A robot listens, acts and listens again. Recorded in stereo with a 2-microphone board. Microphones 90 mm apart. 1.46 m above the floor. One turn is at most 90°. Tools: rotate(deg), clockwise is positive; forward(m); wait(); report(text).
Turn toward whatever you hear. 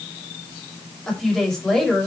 rotate(-30)
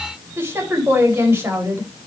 rotate(25)
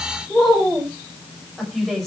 report("Facing the woman speaking.")